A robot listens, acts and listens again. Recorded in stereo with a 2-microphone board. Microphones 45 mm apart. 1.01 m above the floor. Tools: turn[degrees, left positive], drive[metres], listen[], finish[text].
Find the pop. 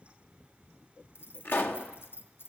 Thought: The pop: about 50° left or 130° left.
Action: turn[50]
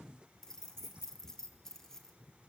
Action: listen[]
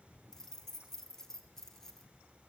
Action: finish[I heard a pop, but can't make it out now. It was about straight ahead or 80° left.]